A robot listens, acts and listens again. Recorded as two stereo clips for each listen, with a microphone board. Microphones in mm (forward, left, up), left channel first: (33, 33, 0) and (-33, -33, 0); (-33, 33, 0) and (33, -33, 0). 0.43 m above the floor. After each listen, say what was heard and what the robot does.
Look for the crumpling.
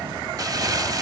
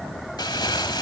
The crumpling: 175° left. Turn 175° left.
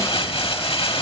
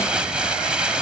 The crumpling is now 35° left. Turn 35° left.
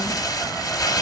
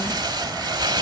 Facing the crumpling, 1 to 2 m away.